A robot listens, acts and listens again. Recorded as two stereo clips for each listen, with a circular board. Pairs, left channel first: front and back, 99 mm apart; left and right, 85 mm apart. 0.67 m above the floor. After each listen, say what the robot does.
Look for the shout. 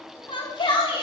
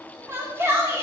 Turn 30° right.
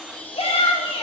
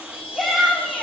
Facing the shout.